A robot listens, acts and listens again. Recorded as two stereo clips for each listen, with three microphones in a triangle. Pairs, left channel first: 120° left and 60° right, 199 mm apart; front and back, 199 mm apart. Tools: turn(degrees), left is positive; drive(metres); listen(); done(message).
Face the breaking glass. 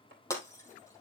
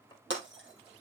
turn(degrees=-165)
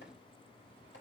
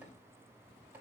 done("I heard breaking glass from this way, but can't make it out now.")